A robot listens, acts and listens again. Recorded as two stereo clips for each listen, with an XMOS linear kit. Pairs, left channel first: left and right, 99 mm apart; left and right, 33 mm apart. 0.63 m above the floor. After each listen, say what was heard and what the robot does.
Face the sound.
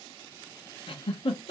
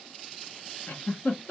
The giggle: about 65° left or 115° left. Turn 65° left.
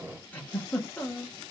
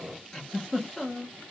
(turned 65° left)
So it is at 20° left. Turn 20° left.
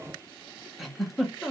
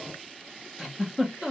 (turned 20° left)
Facing the giggle.